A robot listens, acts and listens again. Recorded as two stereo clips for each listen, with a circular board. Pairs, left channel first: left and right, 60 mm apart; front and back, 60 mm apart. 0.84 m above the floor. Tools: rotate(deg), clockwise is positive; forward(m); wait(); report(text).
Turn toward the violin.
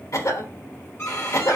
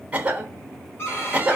rotate(-40)
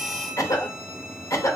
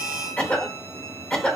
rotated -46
wait()
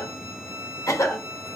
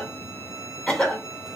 report("Found it: a violin, straight ahead.")